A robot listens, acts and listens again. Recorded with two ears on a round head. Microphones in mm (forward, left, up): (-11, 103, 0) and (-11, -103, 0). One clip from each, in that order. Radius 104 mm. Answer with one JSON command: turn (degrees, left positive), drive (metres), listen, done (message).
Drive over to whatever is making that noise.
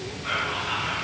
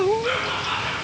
{"turn": -35}
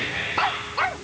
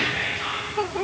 {"drive": 1.0}
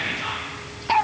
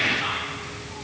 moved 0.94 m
{"turn": -10}
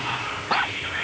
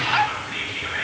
{"drive": 1.0}
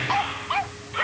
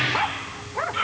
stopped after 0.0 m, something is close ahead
{"done": "I am next to the whispering."}